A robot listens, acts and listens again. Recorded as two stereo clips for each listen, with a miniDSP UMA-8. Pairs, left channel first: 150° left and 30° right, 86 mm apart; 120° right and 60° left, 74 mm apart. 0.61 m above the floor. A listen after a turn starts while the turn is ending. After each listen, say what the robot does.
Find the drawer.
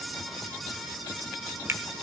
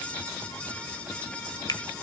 Keep listening.
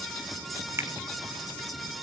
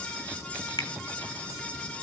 Keep listening.
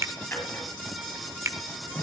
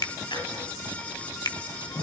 Turn 145° right.
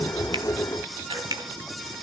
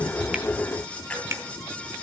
Keep listening.
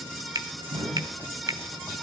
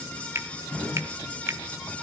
Turn 45° right.
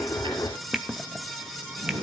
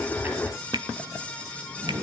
Found it: a drawer, straight ahead.